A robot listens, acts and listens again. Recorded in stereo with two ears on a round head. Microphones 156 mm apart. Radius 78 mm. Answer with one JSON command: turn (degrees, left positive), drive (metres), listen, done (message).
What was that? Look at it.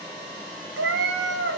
{"turn": -70}
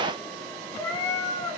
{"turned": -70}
{"turn": 20}
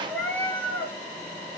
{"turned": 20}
{"turn": 10}
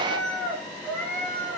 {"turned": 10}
{"turn": 10}
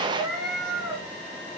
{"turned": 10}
{"done": "Facing the cat meowing."}